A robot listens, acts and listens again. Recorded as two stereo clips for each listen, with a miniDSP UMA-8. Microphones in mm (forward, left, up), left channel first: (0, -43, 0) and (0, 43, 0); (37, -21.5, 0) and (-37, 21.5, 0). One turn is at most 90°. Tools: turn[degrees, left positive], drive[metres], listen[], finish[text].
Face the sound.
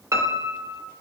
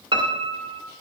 Thought: The piano: 145° left.
Action: turn[90]
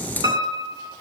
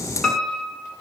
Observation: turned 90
Thought: The piano is now 55° left.
Action: turn[55]
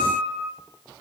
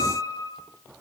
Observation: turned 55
Action: finish[Facing the piano, 1 to 2 m away.]